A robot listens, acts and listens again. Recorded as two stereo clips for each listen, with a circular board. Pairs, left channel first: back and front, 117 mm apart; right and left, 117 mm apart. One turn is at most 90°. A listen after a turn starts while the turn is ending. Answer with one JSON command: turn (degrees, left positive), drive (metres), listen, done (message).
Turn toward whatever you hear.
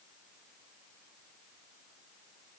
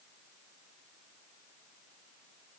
{"listen": true}
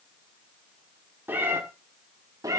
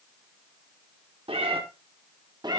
{"turn": 50}
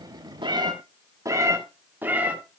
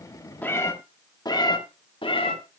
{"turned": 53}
{"turn": -75}
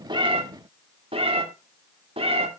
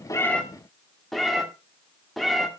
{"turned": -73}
{"done": "Found it: a cat meowing, straight ahead, 1 to 2 m away."}